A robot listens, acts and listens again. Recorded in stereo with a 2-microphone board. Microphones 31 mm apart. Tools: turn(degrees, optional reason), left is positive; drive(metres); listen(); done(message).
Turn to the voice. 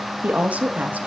turn(degrees=-60, reason="The woman speaking: about 60° right or 120° right.")
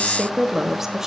turn(degrees=-15, reason="So it is at 15° right.")
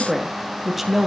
turn(degrees=-10, reason="The woman speaking is now 10° right.")
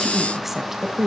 turn(degrees=-15, reason="The woman speaking is now 15° right.")
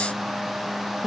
turn(degrees=-15, reason="The woman speaking is now 15° right.")
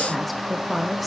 done("Facing the woman speaking.")